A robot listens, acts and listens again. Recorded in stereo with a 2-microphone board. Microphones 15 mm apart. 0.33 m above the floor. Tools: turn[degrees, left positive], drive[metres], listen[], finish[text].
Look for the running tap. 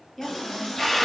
Thought: The running tap: about 75° left or 105° left.
Action: turn[75]
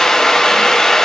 Action: listen[]
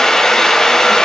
Action: listen[]
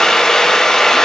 Action: finish[I heard a running tap, but can't make it out now. It was about straight ahead or 30° left.]